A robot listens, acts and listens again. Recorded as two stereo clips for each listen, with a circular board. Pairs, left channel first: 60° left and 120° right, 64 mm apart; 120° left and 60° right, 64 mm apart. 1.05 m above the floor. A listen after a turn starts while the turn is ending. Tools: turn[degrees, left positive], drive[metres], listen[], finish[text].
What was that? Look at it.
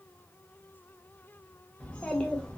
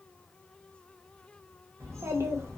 Thought: The child speaking: 15° right.
Action: turn[-15]
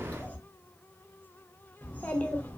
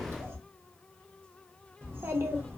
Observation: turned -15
Action: finish[Facing the child speaking.]